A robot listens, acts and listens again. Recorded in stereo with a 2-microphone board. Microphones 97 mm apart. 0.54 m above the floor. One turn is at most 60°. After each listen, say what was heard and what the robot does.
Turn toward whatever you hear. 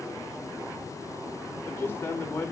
The man speaking: about 20° left or 160° left. Turn 20° left.
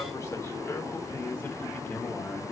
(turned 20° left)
The man speaking: about 20° left or 160° left. Turn 20° left.
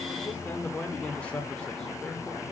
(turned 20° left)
Turn 30° left.
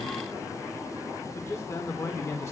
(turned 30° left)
The man speaking: about 30° left or 150° left. Turn 30° left.
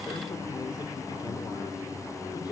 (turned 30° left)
So it is at 130° left. Turn 60° left.
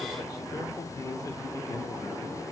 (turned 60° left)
Nothing new. It was at 70° left. Turn 60° left.
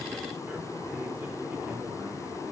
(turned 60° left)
Nothing new. It was at 10° left. Turn 10° left.
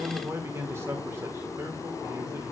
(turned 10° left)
The man speaking is now 30° right. Turn 30° right.
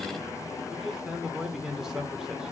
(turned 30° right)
Found it: a man speaking, straight ahead.